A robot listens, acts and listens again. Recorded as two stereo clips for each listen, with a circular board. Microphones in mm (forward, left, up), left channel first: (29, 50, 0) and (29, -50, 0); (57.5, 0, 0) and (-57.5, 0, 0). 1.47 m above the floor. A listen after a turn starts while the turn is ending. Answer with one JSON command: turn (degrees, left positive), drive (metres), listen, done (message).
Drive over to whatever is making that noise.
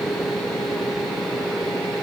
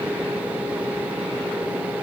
{"listen": true}
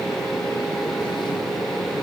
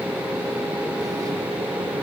{"listen": true}
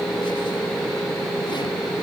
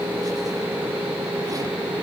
{"done": "I can't make out anything."}